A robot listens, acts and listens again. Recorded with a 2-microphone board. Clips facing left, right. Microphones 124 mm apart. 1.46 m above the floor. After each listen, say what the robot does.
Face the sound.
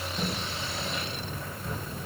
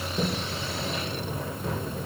Turn 90° right.
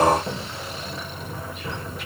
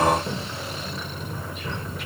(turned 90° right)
Facing the sliding door.